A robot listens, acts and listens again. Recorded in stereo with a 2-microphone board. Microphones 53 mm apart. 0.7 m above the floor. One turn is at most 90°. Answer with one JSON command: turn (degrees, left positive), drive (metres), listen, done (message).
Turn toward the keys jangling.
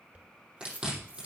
{"turn": -25}
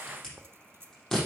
{"turn": -90}
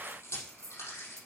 {"turn": -70}
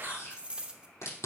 {"turn": -20}
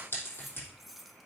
{"done": "Found it: keys jangling, straight ahead."}